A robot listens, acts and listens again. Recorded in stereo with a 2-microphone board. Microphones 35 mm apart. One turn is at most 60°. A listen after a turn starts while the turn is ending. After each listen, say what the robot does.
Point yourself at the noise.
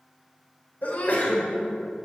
Turn 50° left.
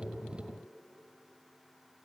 Keep listening.
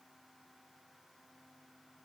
I heard a sneeze, but can't make it out now. It was about straight ahead or 80° left.